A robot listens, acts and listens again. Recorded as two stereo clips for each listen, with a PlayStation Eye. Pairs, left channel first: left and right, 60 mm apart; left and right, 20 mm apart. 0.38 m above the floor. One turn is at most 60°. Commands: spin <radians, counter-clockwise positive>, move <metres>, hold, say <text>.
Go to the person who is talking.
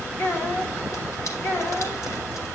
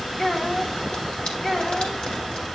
spin 0.70
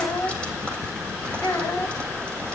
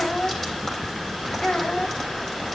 spin 1.05
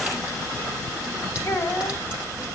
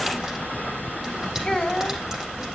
spin 1.05
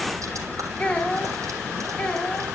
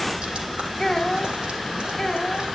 spin 0.35
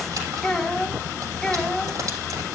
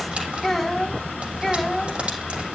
move 1.0
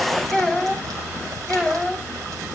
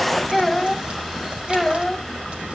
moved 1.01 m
spin 0.17
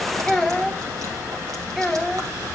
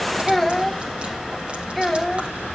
spin 0.17
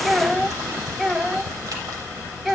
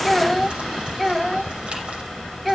move 1.0
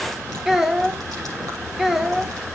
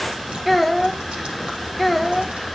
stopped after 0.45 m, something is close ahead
say I am next to the child speaking.